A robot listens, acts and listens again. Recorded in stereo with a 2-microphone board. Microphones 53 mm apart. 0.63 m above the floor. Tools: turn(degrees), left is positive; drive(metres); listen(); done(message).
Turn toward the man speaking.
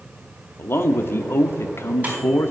turn(degrees=45)
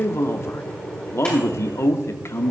turn(degrees=75)
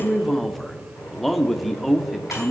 done("Facing the man speaking.")